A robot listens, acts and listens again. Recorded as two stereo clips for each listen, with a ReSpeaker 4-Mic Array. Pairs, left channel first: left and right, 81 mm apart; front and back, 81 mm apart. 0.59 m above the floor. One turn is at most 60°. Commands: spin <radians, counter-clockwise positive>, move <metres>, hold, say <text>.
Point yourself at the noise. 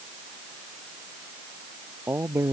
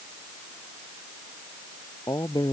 spin -0.52
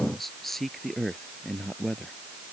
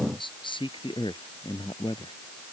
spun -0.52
spin 0.17
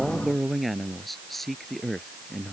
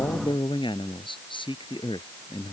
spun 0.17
say Facing the man speaking.